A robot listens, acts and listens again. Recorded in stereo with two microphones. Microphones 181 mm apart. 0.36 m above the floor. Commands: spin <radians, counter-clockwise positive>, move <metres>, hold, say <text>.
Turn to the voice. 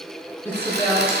spin 0.52
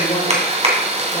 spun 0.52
spin 2.36
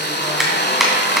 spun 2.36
hold
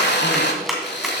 hold
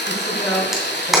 say Found it: a woman speaking, straight ahead.